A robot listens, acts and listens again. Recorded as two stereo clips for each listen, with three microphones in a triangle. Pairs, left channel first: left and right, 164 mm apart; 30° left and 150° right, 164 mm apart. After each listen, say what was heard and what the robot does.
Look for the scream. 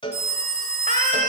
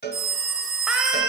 The scream: 65° right. Turn 65° right.
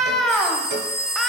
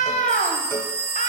Found it: a scream, straight ahead.